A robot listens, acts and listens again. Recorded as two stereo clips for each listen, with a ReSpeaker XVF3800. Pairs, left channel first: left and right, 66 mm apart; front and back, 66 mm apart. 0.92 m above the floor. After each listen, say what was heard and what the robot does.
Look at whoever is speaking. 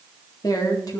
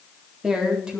The woman speaking: 105° left. Turn 105° left.
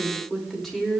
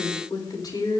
Found it: a woman speaking, straight ahead.